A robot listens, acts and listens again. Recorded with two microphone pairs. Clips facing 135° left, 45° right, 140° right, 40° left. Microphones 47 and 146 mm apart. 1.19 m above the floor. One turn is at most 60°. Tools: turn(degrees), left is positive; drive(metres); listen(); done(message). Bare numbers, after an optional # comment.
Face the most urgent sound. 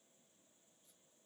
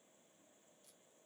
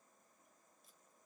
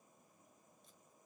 listen()
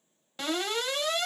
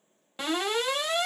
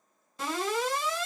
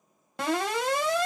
# The alarm: 30° left.
turn(30)
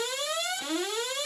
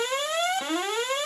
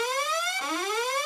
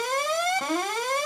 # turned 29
done("Found it: an alarm, straight ahead.")